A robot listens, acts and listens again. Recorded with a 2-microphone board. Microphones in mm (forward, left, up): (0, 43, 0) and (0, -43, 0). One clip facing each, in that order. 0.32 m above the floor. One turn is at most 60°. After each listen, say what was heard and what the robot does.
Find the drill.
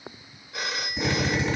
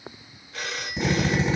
The drill: about 20° right or 160° right. Turn 20° right.
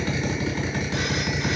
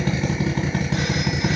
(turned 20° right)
So it is at 135° right. Turn 60° right.
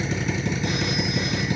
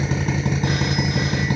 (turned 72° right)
The drill is now 65° right. Turn 60° right.
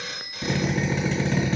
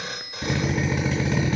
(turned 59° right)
Facing the drill.